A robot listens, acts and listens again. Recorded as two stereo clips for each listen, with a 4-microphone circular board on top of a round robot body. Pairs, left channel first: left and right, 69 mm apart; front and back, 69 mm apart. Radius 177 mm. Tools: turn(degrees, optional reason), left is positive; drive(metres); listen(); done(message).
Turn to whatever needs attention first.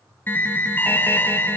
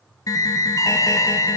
turn(degrees=30, reason="The alarm: 30° left.")
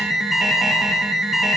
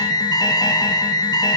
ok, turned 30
done("Found it: an alarm, straight ahead.")